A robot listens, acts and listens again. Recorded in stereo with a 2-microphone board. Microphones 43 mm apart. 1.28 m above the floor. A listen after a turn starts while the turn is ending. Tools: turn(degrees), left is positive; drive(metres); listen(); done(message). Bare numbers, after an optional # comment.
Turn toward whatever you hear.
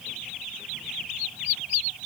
listen()
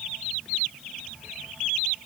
listen()
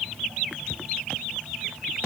done("I can't make out anything.")